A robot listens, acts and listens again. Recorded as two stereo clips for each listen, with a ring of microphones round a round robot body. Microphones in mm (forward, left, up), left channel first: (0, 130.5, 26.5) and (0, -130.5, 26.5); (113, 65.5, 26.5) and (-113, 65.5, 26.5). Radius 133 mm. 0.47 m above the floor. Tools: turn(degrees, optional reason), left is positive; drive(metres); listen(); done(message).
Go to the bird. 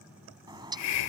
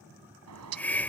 turn(degrees=-165, reason="The bird: 165° right.")
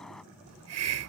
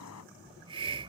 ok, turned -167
drive(metres=1.0)
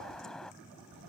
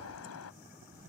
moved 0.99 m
drive(metres=1.0)
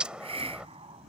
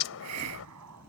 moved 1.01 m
drive(metres=1.0)
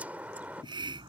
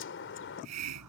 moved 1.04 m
drive(metres=1.0)
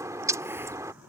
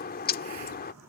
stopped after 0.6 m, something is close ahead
turn(degrees=-15, reason="The bird is now 15° right.")
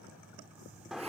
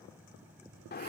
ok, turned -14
done("Arrived at the bird, straight ahead.")